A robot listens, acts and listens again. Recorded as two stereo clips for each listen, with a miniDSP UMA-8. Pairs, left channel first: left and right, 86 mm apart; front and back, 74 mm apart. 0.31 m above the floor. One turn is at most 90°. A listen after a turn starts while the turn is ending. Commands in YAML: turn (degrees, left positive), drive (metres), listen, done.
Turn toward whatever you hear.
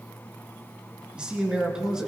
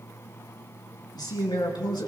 done: "Found it: a man speaking, straight ahead, 2 to 4 m away."